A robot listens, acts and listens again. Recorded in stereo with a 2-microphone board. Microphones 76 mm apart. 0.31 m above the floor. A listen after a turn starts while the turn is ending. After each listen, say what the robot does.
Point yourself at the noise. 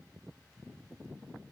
Keep listening.
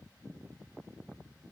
Keep listening.
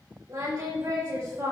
Turn 45° right.
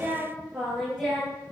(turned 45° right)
Found it: singing, straight ahead, over 4 m away.